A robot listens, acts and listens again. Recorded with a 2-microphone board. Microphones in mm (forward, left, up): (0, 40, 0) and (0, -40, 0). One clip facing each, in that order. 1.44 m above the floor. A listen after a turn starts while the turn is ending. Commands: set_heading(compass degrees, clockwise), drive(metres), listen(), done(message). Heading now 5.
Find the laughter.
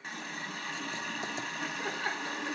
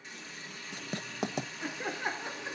set_heading(35)
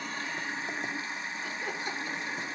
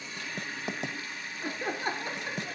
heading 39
set_heading(174)
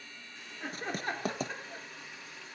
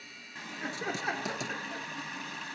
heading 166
set_heading(176)
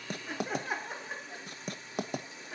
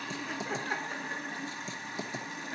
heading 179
done("Facing the laughter, under 1 m away.")